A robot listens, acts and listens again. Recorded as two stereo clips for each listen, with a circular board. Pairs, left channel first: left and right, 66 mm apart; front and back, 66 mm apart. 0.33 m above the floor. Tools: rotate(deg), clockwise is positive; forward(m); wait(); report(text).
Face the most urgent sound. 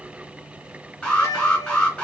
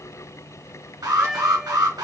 rotate(-165)
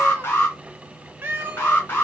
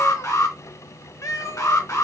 rotate(-35)
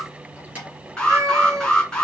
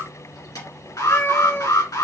rotate(-15)
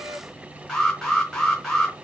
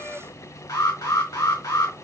report("Found it: an alarm, straight ahead, 2 to 4 m away.")